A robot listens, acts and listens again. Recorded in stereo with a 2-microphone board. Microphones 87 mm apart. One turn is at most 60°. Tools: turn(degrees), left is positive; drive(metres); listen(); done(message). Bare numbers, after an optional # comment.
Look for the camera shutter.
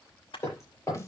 turn(60)
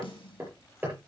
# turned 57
# Nothing new. It was at 35° left.
turn(35)
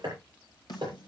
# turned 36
listen()
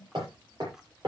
done("Facing where the camera shutter came from. I can't hear it now.")